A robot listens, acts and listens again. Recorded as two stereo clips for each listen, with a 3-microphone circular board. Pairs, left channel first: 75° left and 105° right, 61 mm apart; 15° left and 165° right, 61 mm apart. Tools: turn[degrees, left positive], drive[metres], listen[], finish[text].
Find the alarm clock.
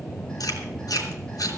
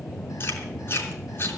Action: listen[]
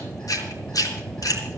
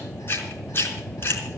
Action: listen[]
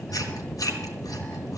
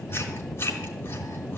Action: finish[I can't make out an alarm clock, only chewing.]